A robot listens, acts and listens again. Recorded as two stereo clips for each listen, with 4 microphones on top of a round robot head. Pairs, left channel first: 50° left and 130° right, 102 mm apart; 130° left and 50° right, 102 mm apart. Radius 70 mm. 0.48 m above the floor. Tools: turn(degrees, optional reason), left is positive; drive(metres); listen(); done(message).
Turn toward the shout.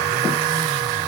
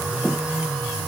listen()
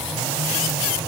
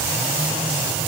listen()
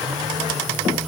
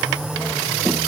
done("I can't make out a shout to turn to.")